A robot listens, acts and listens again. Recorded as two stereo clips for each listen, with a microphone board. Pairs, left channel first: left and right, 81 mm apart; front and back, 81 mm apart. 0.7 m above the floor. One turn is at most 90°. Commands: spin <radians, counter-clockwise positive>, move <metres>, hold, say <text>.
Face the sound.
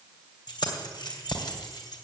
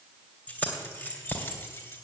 spin 1.05
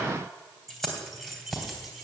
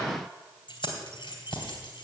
say Found it: keys jangling, straight ahead.